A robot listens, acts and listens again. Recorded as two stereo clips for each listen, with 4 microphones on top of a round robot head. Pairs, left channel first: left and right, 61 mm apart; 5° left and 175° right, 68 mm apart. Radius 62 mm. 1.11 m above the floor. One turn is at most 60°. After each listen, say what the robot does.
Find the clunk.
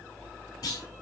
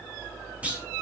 Turn 60° left.
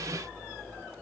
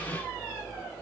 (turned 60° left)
Turn 55° left.
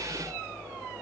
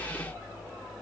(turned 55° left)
I heard a clunk from this way, but can't make it out now.